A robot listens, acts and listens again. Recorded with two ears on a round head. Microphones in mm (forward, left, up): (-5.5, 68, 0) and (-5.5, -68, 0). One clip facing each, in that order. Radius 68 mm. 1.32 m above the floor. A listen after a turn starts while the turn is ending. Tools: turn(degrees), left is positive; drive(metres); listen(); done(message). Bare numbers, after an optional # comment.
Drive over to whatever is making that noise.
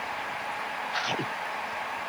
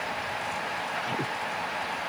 listen()
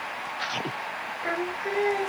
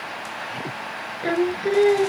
# The singing: about 35° right or 145° right.
turn(-35)
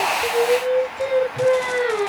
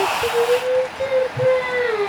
drive(1.0)
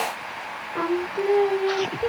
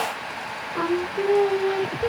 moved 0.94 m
drive(1.0)
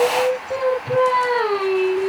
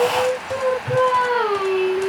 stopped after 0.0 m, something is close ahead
done("Blocked. The singing is further on, straight ahead.")